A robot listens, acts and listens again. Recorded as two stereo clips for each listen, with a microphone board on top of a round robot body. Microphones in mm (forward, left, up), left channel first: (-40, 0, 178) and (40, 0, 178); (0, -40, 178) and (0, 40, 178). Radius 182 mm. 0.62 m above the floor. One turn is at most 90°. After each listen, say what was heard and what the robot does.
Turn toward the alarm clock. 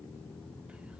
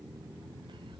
Keep listening.
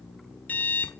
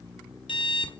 The alarm clock: 110° right. Turn 90° right.
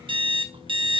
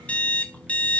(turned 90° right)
The alarm clock is now 15° right. Turn 15° right.
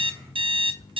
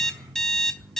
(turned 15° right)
Facing the alarm clock, 1 to 2 m away.